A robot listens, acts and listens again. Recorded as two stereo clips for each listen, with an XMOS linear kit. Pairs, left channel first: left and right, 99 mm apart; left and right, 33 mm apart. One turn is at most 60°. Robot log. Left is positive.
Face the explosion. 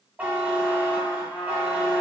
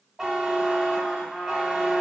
cmd idle
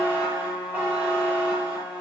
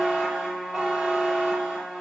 cmd idle
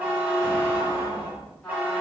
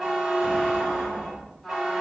note: The explosion: about 25° right or 155° right.
cmd yaw -25
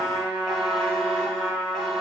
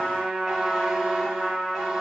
cmd idle
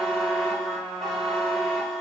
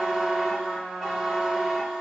end: I heard an explosion, but can't make it out now. It was about straight ahead or 130° right.